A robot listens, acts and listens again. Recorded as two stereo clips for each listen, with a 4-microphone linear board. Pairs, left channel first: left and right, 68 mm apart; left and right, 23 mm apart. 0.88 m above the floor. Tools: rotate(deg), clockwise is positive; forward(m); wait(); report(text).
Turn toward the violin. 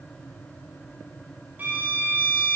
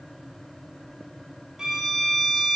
rotate(30)
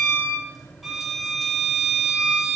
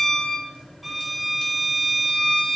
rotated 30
report("Found it: a violin, straight ahead.")